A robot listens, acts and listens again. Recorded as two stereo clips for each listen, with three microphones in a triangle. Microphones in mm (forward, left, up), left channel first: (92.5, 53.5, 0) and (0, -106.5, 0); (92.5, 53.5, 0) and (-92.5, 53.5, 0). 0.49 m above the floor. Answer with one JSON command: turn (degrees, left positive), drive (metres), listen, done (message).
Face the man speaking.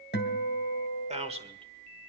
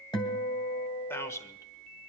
{"turn": -70}
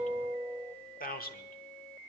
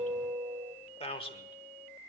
{"turn": 55}
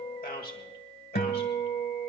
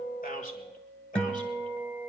{"turn": 40}
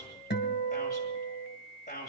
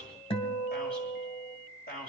{"turn": 20}
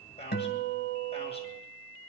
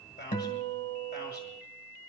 {"done": "Found it: a man speaking, straight ahead, 2 to 4 m away."}